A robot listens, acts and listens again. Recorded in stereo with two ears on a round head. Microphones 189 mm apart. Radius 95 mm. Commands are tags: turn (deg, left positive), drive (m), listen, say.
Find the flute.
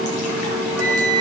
<turn deg="30"/>
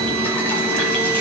<listen/>
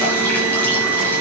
<listen/>
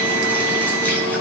<say>I heard a flute, but can't make it out now. It was about 20° right or 140° left.</say>